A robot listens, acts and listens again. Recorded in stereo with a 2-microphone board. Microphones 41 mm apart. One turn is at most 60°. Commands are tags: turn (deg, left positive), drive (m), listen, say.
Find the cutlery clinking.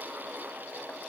<listen/>
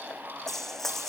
<turn deg="30"/>
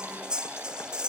<turn deg="-15"/>
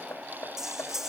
<say>Found it: cutlery clinking, straight ahead.</say>